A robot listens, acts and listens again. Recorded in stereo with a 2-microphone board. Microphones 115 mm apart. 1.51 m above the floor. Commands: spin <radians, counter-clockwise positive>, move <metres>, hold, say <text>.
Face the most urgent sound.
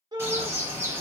spin -0.61
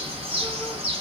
hold
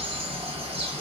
hold
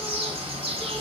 say I heard a shout, but can't make it out now. It was about straight ahead or 110° right.